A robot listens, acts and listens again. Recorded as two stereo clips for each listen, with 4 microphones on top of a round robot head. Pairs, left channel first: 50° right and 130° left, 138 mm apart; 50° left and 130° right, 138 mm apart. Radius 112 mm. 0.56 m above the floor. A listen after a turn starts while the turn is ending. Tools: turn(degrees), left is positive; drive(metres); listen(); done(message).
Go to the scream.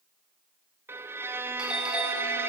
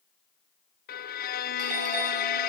listen()
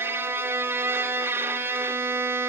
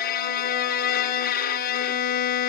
listen()
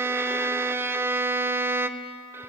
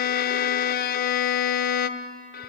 done("I can't make out a scream, only a violin.")